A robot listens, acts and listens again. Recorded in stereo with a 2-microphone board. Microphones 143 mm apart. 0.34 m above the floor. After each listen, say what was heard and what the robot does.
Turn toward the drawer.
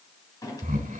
The drawer: about 25° left or 155° left. Turn 25° left.
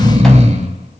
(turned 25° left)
Keep listening.
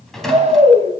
Facing the drawer, 1 to 2 m away.